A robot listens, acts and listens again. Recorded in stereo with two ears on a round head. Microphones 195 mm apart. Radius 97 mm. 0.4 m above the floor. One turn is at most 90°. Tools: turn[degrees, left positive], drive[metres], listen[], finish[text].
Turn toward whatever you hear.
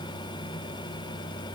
Action: listen[]
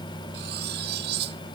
Thought: The cutlery clinking: about 50° right or 130° right.
Action: turn[-50]
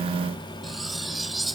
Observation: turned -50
Action: finish[Found it: cutlery clinking, straight ahead.]